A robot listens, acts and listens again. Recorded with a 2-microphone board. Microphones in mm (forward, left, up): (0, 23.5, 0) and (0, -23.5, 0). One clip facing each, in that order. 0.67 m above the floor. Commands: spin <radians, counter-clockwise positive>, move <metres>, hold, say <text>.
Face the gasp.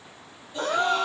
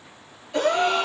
spin -1.57
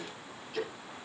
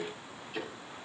say I heard a gasp from this way, but can't make it out now.